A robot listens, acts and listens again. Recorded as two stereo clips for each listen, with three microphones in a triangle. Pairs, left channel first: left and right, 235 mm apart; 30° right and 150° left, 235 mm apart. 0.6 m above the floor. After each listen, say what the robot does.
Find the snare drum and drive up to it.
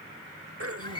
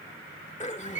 Keep listening.
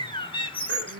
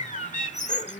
Keep listening.
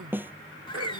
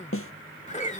Turn 10° right.
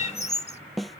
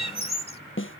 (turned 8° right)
Drive 1.0 m forward.
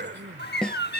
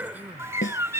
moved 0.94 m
Drive 1.0 m forward.
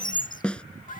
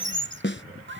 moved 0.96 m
Drive 1.0 m forward.
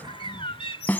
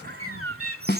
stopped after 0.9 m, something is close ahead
Turn 10° left.
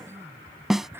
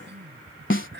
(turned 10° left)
Arrived at the snare drum, straight ahead.